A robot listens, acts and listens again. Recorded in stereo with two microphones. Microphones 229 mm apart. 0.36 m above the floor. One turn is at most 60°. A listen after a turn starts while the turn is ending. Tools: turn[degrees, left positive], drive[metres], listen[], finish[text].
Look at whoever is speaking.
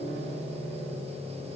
Action: listen[]
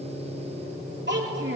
Thought: The child speaking: about 50° right or 130° right.
Action: turn[-50]
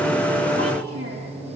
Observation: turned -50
Action: listen[]
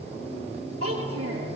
Thought: So it is at 80° right.
Action: turn[-60]
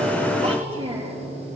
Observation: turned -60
Thought: The child speaking is now 25° right.
Action: turn[-25]
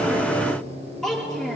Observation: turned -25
Action: finish[Facing the child speaking.]